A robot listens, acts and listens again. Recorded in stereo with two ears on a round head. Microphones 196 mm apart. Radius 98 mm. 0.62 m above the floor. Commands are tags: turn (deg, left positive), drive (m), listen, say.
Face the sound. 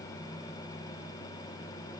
<listen/>
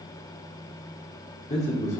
<turn deg="30"/>
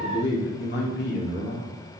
<turn deg="110"/>
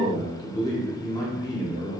<turn deg="20"/>
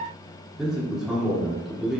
<say>Found it: a man speaking, straight ahead.</say>